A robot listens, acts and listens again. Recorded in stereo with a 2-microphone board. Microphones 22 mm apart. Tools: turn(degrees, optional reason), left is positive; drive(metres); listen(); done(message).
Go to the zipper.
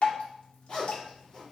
turn(degrees=45, reason="The zipper: about 45° left or 135° left.")
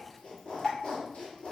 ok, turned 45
turn(degrees=90, reason="So it is at 90° left.")
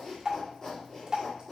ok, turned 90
turn(degrees=30, reason="The zipper is now 30° left.")
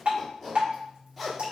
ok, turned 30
drive(metres=1.0)
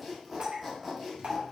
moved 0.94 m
drive(metres=1.0)
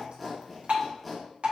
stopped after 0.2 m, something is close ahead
done("I am next to the zipper.")